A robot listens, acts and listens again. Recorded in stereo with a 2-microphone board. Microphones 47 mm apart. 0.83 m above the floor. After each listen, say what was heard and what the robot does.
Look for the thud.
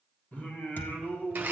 The thud: about 45° left or 135° left. Turn 45° left.
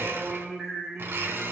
Keep listening.
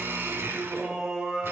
I heard a thud, but can't make it out now. It was about straight ahead or 90° left.